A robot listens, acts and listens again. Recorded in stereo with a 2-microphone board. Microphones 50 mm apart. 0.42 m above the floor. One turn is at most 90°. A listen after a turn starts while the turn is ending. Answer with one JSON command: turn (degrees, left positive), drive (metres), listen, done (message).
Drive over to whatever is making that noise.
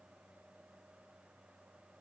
{"listen": true}
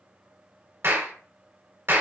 {"turn": -50}
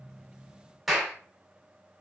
{"drive": 1.0}
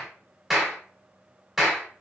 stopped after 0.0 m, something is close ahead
{"done": "Blocked. The clap is further on, straight ahead."}